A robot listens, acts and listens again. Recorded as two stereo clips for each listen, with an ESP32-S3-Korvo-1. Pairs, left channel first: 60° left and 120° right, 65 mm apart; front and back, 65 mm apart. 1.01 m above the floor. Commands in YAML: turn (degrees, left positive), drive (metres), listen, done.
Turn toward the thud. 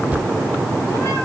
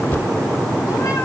turn: -55
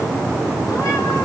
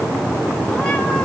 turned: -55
done: "Facing where the thud came from. I can't hear it now."